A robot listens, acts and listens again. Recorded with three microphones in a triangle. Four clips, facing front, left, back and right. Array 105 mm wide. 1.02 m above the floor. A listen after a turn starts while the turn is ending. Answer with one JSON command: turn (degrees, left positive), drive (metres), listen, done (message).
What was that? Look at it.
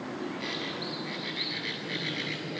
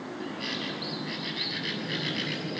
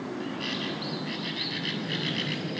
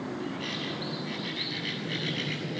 {"turn": 145}
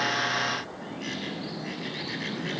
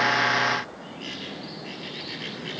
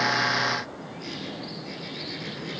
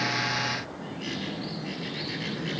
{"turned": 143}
{"done": "Facing the bird, over 4 m away."}